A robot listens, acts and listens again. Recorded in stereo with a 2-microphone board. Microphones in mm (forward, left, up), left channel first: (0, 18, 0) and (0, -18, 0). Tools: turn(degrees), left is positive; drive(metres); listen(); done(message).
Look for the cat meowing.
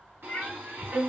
turn(degrees=30)
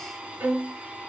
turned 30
listen()
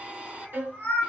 turn(degrees=110)
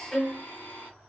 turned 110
listen()
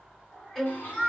done("Found it: a cat meowing, straight ahead.")